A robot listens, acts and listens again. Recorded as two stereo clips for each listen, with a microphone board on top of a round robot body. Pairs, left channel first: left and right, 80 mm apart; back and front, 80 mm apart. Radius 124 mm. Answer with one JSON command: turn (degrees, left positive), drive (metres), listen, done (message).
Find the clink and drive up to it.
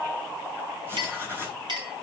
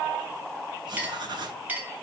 {"turn": -70}
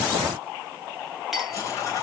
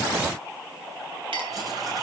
{"listen": true}
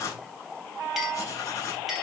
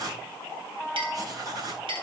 {"drive": 1.0}
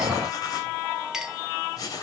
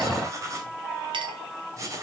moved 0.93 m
{"turn": -10}
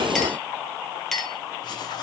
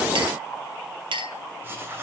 {"drive": 1.0}
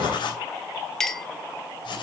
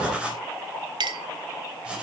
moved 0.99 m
{"drive": 1.0}
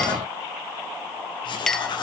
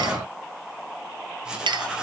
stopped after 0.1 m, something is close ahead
{"done": "I am next to the clink."}